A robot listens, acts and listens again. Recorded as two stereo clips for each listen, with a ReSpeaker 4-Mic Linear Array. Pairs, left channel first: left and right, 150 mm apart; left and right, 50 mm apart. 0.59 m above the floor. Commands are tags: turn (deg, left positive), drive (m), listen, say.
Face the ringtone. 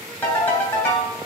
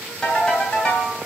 <turn deg="30"/>
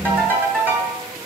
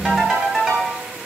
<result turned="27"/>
<turn deg="-15"/>
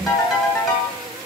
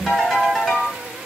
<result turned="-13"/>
<say>Found it: a ringtone, straight ahead, 2 to 4 m away.</say>